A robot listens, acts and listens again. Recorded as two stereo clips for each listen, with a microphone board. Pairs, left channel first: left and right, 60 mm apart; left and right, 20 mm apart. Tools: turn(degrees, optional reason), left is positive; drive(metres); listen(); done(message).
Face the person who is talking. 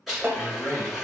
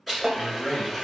turn(degrees=50, reason="The man speaking: about 50° left or 130° left.")
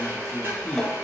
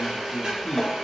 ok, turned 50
done("Facing the man speaking, 1 to 2 m away.")